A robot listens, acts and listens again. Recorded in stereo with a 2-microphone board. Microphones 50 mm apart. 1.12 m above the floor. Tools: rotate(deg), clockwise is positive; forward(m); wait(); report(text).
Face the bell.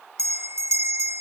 rotate(65)
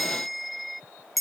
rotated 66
report("Facing the bell.")